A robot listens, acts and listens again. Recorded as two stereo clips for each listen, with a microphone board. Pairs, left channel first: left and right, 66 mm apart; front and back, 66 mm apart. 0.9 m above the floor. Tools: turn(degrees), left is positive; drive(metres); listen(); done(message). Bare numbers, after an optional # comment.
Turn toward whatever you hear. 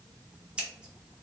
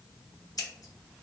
# The scissors: 15° right.
turn(-15)
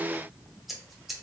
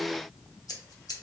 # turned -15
done("Found it: scissors, straight ahead, under 1 m away.")